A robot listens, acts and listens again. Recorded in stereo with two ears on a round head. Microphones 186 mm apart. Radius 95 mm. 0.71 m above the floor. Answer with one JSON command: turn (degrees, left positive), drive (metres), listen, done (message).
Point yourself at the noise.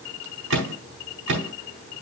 {"turn": -65}
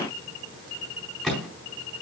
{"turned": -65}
{"done": "Found it: a microwave, straight ahead, 2 to 4 m away."}